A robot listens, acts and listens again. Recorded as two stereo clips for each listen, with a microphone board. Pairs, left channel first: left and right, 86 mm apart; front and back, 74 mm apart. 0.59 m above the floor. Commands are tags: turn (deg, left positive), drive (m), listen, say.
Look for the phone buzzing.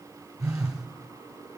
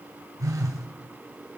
<turn deg="-135"/>
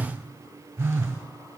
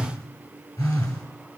<turn deg="-30"/>
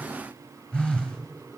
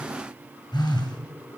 <turn deg="10"/>
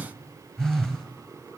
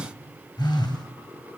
<say>Found it: a phone buzzing, straight ahead.</say>